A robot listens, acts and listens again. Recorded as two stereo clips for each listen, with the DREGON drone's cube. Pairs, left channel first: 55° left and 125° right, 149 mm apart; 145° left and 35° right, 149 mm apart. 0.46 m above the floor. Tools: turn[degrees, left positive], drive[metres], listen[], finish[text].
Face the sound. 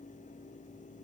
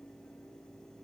Action: listen[]
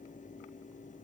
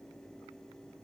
Action: listen[]
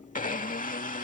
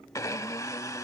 Thought: The blender: 80° left.
Action: turn[80]
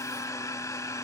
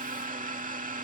Thought: The blender is now 10° right.
Action: turn[-10]
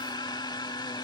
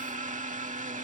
Action: finish[Facing the blender.]